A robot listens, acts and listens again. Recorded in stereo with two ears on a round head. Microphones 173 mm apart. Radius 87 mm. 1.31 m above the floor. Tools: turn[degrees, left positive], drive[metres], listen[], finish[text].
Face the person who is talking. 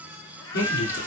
Thought: The man speaking: about 55° left or 125° left.
Action: turn[55]
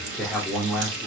Action: finish[Facing the man speaking.]